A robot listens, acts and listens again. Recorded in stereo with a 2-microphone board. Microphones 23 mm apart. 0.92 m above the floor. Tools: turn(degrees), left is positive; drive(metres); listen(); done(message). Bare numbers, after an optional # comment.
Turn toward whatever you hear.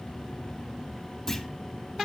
# The clunk: about 25° left or 155° left.
turn(25)
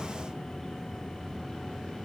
listen()
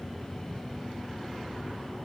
done("I heard a clunk, but can't make it out now. It was about straight ahead or 130° left.")